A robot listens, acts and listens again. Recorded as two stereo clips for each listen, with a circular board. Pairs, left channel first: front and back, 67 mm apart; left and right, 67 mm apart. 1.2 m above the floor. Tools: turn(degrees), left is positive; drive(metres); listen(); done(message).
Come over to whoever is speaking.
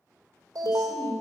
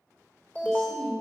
turn(degrees=10)
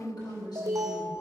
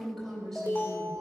drive(metres=1.0)
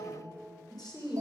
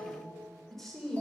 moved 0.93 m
drive(metres=1.0)
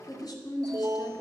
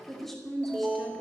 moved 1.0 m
drive(metres=1.0)
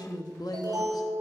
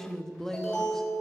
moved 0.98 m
drive(metres=1.0)
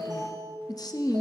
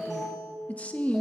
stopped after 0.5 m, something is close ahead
turn(degrees=20)
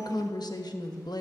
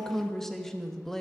done("Arrived at the woman speaking, straight ahead.")